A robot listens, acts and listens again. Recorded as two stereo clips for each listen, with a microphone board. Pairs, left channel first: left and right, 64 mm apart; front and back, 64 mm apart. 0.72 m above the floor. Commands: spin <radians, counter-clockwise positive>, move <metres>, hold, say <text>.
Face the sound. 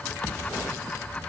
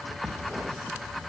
hold
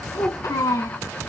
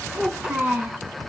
spin 1.75
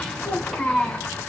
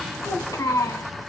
say Found it: a child speaking, straight ahead.